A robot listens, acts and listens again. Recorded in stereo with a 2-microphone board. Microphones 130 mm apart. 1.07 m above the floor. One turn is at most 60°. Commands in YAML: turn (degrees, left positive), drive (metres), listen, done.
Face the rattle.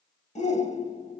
listen: true
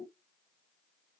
listen: true
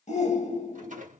turn: -60
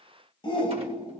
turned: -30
turn: -60
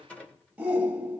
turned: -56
turn: 10
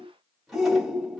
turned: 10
done: "Found it: a rattle, straight ahead."